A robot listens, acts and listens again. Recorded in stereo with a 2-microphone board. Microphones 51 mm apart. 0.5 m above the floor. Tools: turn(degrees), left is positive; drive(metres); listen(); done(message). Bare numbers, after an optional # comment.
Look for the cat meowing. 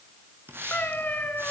# The cat meowing: about 35° left or 145° left.
turn(35)
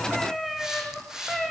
done("Facing the cat meowing, 2 to 4 m away.")